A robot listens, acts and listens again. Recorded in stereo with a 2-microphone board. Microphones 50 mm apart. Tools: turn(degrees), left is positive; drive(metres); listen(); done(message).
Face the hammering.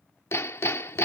turn(degrees=60)
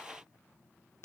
turn(degrees=60)
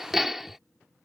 done("Found it: hammering, straight ahead.")